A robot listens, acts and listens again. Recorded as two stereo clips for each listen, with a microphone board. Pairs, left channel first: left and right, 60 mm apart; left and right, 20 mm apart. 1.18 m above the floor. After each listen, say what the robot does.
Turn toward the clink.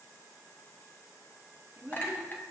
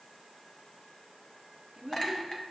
Turn 35° left.
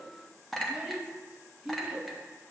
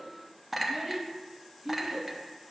Facing the clink, under 1 m away.